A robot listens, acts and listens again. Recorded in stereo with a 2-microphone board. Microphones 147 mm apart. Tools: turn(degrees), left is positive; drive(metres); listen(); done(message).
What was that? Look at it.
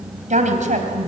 turn(degrees=-60)
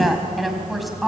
done("Found it: a woman speaking, straight ahead.")